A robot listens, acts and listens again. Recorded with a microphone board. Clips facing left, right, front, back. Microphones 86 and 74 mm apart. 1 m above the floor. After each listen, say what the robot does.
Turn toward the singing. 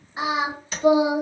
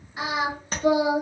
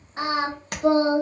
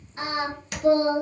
Turn 25° left.
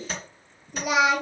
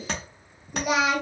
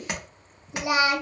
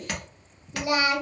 Facing the singing, 1 to 2 m away.